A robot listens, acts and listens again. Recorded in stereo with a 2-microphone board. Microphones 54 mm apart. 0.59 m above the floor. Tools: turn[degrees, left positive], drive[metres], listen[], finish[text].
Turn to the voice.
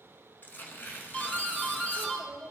Thought: The child speaking: about 20° right or 160° right.
Action: turn[-20]
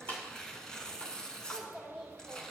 Action: finish[Facing the child speaking, 1 to 2 m away.]